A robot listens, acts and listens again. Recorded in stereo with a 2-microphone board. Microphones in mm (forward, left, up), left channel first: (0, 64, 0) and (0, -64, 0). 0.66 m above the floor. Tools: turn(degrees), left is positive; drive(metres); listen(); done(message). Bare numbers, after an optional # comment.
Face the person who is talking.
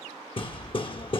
listen()
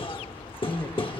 # The man speaking: about 20° left or 160° left.
turn(20)
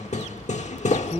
# So it is at 10° right.
turn(-10)
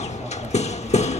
listen()
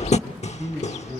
done("Found it: a man speaking, straight ahead, over 4 m away.")